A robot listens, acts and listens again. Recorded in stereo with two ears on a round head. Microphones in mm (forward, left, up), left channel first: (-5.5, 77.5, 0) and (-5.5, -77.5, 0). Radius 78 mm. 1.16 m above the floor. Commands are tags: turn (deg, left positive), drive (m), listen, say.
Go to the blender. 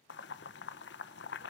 <listen/>
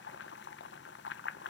<listen/>
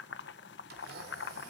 <turn deg="-65"/>
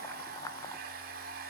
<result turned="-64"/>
<turn deg="-55"/>
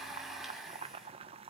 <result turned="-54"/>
<drive m="1.0"/>
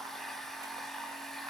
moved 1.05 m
<drive m="1.0"/>
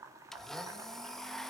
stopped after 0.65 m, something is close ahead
<say>I am next to the blender.</say>